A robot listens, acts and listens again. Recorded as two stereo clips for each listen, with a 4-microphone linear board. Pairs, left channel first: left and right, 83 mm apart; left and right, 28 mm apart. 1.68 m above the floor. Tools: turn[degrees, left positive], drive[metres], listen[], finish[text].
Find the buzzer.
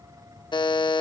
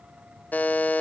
Thought: The buzzer: about 75° left or 105° left.
Action: turn[75]
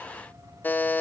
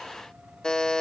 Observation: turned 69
Thought: So it is at 25° left.
Action: turn[25]
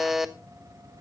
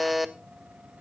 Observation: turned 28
Action: finish[Facing the buzzer, 1 to 2 m away.]